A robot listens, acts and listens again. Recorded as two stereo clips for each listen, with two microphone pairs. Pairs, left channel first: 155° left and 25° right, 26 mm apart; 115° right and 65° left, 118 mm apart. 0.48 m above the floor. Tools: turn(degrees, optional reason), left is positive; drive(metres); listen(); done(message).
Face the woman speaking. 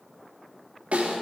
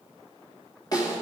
listen()
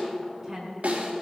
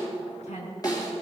turn(degrees=-100, reason="The woman speaking: 100° right.")
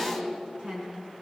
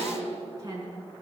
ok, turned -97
turn(degrees=10, reason="The woman speaking is now 10° left.")
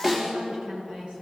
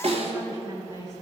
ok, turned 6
turn(degrees=10, reason="The woman speaking is now 10° left.")
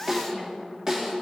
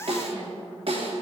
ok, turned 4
listen()
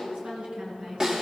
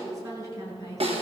turn(degrees=10, reason="The woman speaking is now 10° left.")
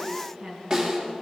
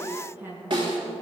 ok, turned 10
done("Facing the woman speaking, over 4 m away.")